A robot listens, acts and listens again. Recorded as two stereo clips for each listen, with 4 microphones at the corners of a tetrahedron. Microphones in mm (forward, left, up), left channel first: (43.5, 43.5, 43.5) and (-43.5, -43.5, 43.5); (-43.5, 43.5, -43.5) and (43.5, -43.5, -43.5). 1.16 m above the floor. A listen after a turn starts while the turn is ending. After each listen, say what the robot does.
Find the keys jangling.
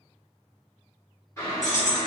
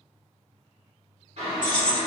Turn 55° left.
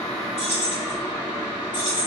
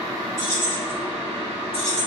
Turn 15° right.
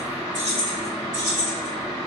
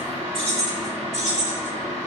Turn 20° right.
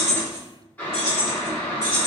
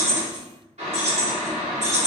Turn 15° right.
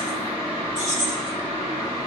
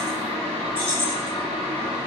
Found it: keys jangling, straight ahead.